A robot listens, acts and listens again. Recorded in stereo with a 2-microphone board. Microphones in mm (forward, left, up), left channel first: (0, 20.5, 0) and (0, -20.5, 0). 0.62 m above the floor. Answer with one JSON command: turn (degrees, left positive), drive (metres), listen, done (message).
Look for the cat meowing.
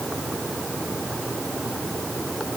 {"listen": true}
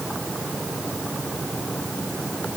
{"listen": true}
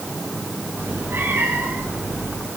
{"turn": -90}
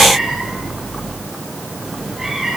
{"turn": -10}
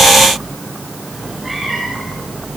{"done": "Facing the cat meowing, over 4 m away."}